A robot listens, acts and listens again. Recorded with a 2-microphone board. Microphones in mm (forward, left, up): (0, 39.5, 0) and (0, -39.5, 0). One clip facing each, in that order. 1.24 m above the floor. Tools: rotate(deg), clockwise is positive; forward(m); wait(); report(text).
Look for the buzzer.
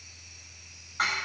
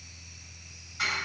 wait()
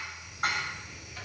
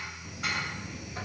rotate(30)
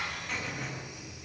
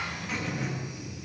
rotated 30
report("Found it: a buzzer, straight ahead, 1 to 2 m away.")